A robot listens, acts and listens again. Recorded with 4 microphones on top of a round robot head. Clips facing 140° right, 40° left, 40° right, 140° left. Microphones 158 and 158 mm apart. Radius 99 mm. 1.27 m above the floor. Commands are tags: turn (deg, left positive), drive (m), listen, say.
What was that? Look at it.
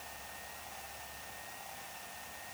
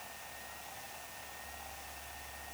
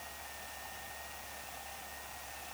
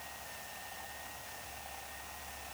<listen/>
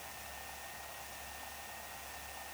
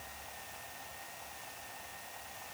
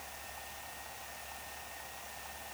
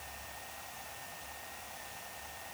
<listen/>
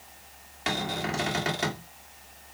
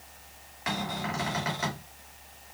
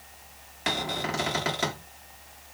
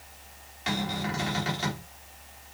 <turn deg="-75"/>
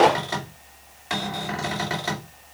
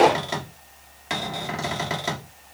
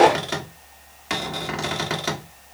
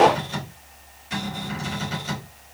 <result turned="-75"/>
<turn deg="-30"/>
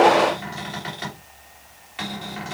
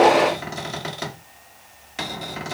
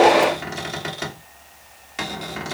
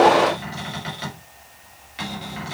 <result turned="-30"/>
<say>Facing the cupboard door.</say>